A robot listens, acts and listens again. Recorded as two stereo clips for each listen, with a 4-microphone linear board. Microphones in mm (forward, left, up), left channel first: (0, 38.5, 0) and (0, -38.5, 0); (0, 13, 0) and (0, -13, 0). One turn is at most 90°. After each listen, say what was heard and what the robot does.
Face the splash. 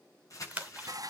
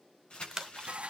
The splash: about 15° right or 165° right. Turn 15° right.
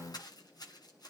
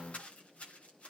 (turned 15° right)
Keep listening.
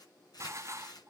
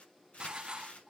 I heard a splash, but can't make it out now. It was about straight ahead or 150° right.